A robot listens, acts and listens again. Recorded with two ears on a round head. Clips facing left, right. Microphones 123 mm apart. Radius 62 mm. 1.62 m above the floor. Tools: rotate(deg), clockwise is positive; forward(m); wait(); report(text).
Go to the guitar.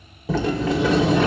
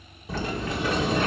wait()
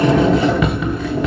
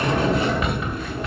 wait()
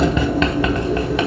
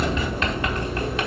report("I can't make out a guitar to turn to.")